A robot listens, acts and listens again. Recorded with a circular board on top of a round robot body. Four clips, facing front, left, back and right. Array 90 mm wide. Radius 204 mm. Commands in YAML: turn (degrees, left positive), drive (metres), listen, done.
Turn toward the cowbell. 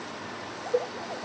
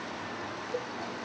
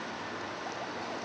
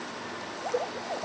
turn: -15
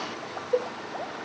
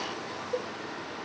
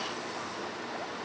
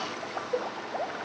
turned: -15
done: "Found it: a cowbell, straight ahead."